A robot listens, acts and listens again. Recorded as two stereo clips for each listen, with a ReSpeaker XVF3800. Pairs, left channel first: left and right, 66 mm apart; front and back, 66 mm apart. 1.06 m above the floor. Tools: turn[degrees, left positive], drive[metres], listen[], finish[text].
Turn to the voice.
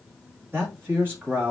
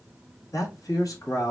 Thought: The man speaking: 35° right.
Action: turn[-35]
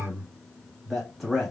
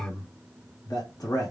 Action: finish[Facing the man speaking, 1 to 2 m away.]